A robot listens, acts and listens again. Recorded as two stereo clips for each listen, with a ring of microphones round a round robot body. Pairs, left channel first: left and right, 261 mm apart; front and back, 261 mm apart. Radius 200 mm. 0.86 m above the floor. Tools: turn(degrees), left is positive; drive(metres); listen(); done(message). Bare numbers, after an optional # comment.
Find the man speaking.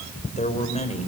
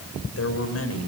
# The man speaking: 25° left.
turn(25)
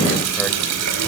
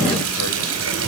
listen()
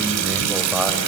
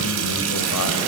listen()
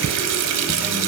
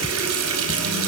done("I heard a man speaking from this way, but can't make it out now.")